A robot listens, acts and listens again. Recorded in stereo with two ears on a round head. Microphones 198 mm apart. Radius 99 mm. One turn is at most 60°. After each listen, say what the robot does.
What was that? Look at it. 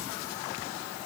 Keep listening.
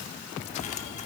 Turn 30° left.
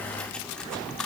Found it: cutlery clinking, straight ahead.